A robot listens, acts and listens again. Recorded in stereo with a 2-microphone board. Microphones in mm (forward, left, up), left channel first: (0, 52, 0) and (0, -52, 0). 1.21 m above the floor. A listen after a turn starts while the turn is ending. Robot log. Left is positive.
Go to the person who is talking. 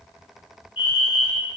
cmd idle
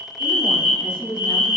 note: The woman speaking: about 65° left or 115° left.
cmd yaw +65
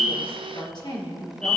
note: So it is at 55° left.
cmd yaw +55
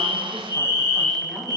cmd idle
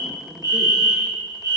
cmd idle
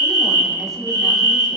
end: I heard a woman speaking from this way, but can't make it out now. I did not reach it.